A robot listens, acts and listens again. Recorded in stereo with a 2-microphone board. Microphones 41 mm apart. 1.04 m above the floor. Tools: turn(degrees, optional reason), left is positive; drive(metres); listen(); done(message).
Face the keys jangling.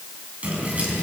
turn(degrees=-35, reason="The keys jangling: about 35° right or 145° right.")
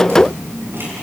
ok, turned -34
turn(degrees=-110, reason="So it is at 110° right.")
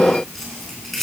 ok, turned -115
done("Facing the keys jangling.")